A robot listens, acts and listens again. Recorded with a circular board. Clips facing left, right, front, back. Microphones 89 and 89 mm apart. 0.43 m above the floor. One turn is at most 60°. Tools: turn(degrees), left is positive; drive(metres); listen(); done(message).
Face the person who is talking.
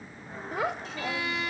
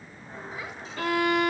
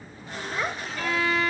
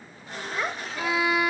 turn(degrees=60)
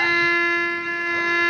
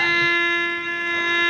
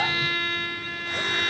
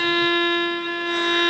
turn(degrees=30)
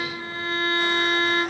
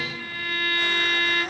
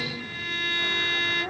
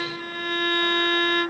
listen()
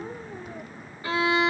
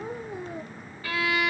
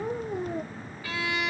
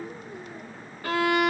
turn(degrees=-15)
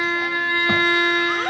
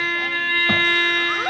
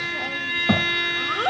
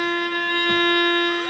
done("Found it: a child speaking, straight ahead.")